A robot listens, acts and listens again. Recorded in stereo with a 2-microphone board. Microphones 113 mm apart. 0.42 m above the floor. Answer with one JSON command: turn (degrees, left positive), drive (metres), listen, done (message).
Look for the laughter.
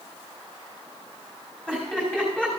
{"turn": 30}
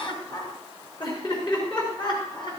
{"turn": 130}
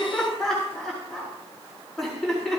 {"done": "Facing the laughter."}